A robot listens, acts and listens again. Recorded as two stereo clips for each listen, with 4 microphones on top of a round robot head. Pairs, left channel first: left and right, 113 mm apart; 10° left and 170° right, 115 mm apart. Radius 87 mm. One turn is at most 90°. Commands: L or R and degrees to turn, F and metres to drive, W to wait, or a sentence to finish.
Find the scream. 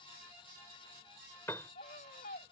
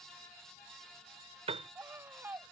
L90
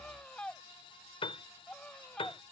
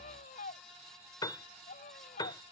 L10
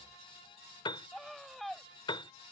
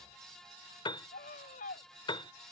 Facing the scream.